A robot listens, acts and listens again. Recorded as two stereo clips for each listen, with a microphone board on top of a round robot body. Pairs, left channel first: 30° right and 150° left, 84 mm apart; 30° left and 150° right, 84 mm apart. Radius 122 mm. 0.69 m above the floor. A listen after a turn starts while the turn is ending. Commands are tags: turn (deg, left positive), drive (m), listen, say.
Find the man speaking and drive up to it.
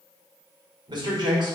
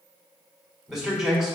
<turn deg="125"/>
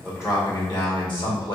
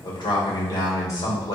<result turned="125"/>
<turn deg="-10"/>
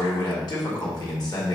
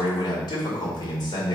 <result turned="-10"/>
<drive m="1.0"/>
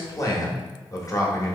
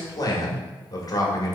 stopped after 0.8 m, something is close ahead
<say>Arrived at the man speaking, straight ahead.</say>